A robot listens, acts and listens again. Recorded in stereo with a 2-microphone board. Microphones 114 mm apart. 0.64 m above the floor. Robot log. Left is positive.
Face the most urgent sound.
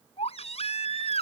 note: The baby crying: about 70° left or 110° left.
cmd yaw +70
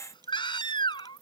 note: So it is at 45° left.
cmd yaw +45
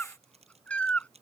note: The baby crying is now 10° left.
cmd yaw +10
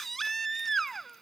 end: Facing the baby crying.